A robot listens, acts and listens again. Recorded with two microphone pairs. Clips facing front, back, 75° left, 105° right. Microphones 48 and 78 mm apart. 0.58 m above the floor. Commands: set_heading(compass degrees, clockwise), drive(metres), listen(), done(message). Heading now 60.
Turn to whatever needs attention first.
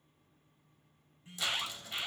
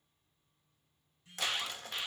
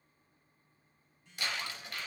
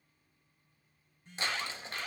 set_heading(120)
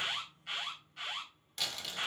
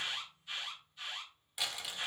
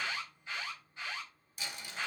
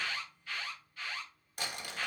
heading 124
done("Facing the alarm, over 4 m away.")